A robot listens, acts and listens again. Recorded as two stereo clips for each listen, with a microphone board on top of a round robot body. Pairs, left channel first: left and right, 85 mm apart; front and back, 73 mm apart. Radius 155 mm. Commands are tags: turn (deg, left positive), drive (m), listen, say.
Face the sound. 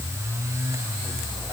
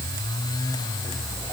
<listen/>
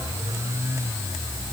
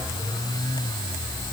<listen/>
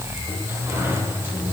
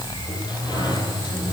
<turn deg="-25"/>
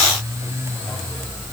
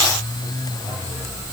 <listen/>
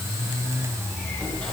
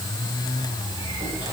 <listen/>
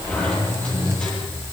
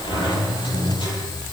<turn deg="15"/>
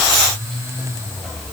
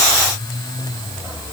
<listen/>
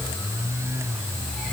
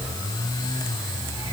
<listen/>
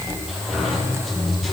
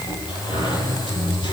<say>Facing the sliding door.</say>